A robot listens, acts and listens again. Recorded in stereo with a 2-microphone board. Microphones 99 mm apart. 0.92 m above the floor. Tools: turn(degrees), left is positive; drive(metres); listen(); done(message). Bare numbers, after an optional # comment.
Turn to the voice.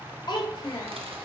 # The child speaking: about 45° left or 135° left.
turn(45)
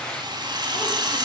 listen()
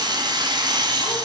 listen()
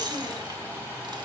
done("I heard a child speaking, but can't make it out now. It was about straight ahead or 90° left.")